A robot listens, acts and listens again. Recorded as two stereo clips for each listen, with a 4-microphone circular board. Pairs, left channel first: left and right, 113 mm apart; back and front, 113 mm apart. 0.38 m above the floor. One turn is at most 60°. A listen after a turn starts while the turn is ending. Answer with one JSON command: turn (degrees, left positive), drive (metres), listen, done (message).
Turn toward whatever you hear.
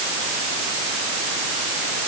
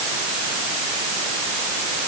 {"listen": true}
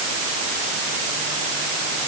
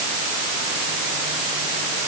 {"listen": true}
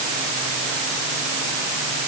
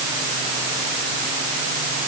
{"done": "I can't make out anything."}